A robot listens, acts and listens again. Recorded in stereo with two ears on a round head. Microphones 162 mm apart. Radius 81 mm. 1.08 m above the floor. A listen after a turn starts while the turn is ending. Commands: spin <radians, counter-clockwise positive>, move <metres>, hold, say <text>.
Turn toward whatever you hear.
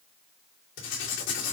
spin 1.57
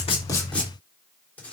spin 0.17
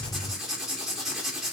say Found it: writing, straight ahead, 2 to 4 m away.